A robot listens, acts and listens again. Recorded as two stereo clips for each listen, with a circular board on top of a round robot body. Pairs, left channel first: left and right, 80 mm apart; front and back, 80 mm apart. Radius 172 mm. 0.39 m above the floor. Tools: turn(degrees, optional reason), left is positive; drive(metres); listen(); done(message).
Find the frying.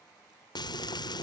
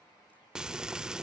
turn(degrees=100, reason="The frying: 100° left.")
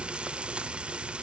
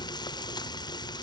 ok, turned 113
turn(degrees=-15, reason="The frying is now 15° right.")
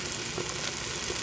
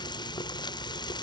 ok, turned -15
done("Found it: frying, straight ahead.")